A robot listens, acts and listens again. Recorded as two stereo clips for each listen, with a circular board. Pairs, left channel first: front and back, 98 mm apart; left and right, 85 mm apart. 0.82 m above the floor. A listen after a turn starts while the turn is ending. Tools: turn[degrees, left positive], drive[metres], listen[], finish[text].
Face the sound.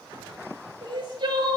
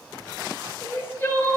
Thought: The crying: 155° left.
Action: turn[155]
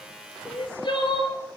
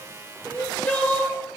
Thought: The crying is now 25° left.
Action: turn[25]
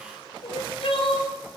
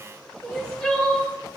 Thought: The crying is now 10° left.
Action: turn[10]
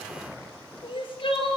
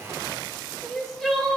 Action: finish[Facing the crying, 2 to 4 m away.]